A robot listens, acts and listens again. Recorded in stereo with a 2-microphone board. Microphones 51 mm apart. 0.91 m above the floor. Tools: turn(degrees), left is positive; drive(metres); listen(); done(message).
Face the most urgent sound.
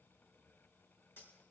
listen()
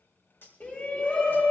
turn(degrees=40)
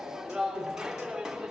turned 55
turn(degrees=-15)
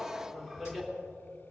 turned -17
done("Facing the shout.")